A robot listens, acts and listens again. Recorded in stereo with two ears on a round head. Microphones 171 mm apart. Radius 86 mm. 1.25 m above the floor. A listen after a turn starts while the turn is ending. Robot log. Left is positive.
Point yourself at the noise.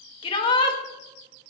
note: The shout: about 25° left or 155° left.
cmd yaw +25
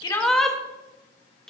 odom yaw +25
end: Found it: a shout, straight ahead.